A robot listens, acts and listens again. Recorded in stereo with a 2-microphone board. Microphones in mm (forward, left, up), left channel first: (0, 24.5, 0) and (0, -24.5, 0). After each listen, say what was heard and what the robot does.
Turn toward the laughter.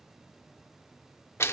Keep listening.
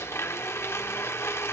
Keep listening.
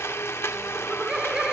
Turn 30° right.
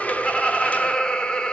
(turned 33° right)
So it is at 20° left. Turn 20° left.
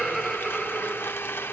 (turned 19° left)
Facing the laughter, 1 to 2 m away.